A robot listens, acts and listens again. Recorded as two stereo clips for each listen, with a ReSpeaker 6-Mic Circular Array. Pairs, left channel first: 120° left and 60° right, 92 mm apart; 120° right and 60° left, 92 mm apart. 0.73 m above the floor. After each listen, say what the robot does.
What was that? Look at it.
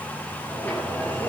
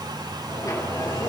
Turn 170° right.
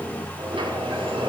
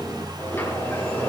Turn 55° right.
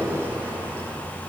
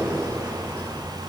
Found it: a sliding door, straight ahead.